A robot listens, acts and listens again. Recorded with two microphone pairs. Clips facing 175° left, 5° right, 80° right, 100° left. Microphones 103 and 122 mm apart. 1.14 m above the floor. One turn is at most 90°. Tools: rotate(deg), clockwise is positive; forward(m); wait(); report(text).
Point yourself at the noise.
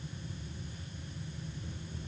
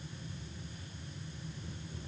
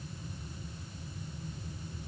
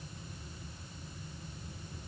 wait()
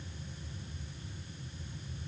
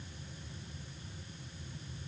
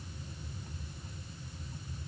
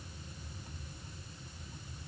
wait()
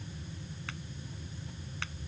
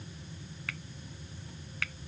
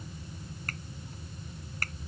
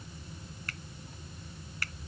rotate(90)
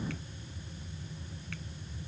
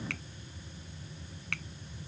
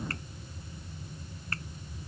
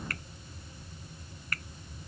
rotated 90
rotate(35)
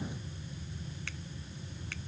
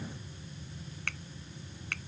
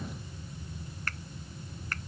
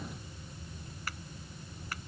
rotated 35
rotate(-20)
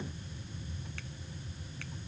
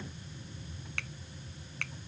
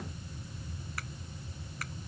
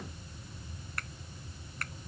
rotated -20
rotate(-10)
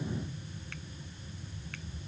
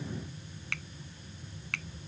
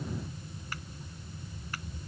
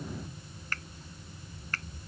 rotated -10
report("Facing the finger snap.")